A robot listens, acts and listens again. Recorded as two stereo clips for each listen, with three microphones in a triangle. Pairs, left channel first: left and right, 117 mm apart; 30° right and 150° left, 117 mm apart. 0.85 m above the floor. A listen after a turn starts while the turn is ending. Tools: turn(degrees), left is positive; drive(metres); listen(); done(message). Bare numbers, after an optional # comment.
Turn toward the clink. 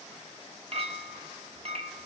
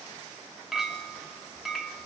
# The clink: 120° right.
turn(-120)
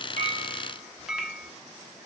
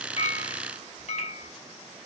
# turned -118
done("Facing the clink, 1 to 2 m away.")